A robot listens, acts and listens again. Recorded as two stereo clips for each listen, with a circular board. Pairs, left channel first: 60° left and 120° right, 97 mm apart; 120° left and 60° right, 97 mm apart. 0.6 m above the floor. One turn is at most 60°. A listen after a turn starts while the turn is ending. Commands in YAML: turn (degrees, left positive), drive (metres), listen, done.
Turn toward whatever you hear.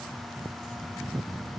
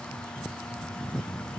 listen: true
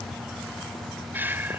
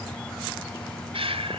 turn: -50
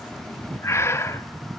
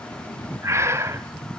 done: "Facing the breathing, 1 to 2 m away."